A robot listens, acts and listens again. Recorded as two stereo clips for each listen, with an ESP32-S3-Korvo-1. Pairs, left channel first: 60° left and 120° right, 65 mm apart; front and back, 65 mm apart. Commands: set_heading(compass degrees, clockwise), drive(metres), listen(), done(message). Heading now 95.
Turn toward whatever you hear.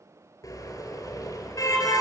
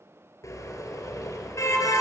set_heading(60)
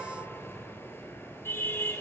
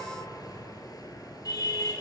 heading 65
set_heading(55)
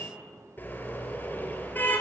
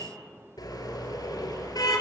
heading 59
done("Found it: a car horn, straight ahead.")